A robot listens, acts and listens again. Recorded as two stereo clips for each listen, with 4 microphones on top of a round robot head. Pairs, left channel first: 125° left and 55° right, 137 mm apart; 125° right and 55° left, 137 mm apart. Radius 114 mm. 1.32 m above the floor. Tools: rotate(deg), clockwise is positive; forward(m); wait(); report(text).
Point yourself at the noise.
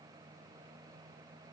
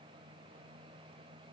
wait()
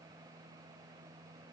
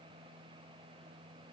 wait()
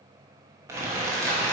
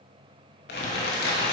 rotate(130)
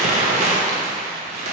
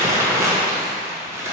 rotate(15)
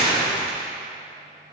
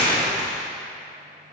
report("Facing the crumpling, under 1 m away.")